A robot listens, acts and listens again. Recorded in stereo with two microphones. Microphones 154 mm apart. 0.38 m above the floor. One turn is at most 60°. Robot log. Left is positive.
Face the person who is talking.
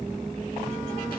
cmd idle
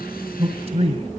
note: The man speaking: about 40° right or 140° right.
cmd yaw -40
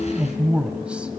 note: So it is at 10° right.
cmd yaw -10
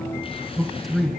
end: Found it: a man speaking, straight ahead, 2 to 4 m away.